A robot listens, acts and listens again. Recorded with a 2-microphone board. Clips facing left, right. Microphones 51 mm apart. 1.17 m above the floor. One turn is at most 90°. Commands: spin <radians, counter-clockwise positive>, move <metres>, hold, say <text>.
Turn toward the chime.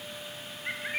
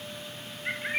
hold
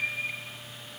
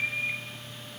hold
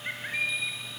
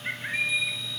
spin 1.13
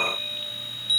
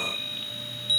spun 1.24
say Found it: a chime, straight ahead.